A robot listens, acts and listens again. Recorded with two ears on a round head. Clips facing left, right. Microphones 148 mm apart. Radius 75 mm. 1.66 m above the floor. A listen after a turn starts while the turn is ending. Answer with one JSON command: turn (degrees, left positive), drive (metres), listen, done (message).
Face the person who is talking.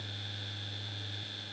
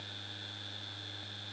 {"listen": true}
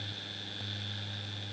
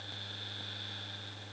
{"listen": true}
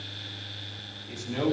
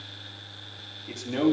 {"turn": -65}
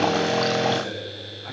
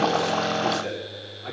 {"turn": -50}
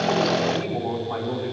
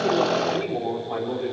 {"turn": -10}
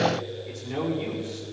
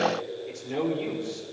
{"done": "Facing the man speaking, over 4 m away."}